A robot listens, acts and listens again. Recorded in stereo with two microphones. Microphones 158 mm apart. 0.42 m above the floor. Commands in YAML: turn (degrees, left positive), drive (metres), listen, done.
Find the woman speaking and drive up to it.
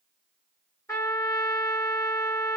listen: true
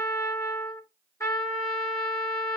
listen: true
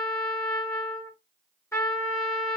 done: "I can't make out a woman speaking to turn to."